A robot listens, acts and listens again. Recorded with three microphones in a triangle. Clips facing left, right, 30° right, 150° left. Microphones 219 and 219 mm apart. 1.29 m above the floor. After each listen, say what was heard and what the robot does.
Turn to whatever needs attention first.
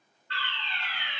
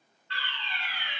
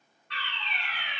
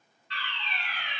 The fire alarm: 55° left. Turn 55° left.
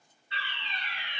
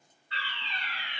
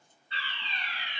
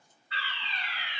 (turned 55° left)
The fire alarm is now 25° left. Turn 25° left.
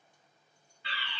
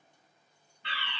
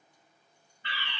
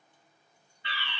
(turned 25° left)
Facing the fire alarm, 1 to 2 m away.